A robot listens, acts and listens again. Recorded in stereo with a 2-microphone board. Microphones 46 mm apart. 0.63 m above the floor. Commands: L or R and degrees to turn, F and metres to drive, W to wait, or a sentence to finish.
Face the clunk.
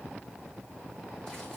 W
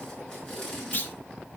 L50
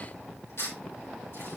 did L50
W
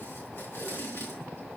I heard a clunk, but can't make it out now. It was about straight ahead or 80° left.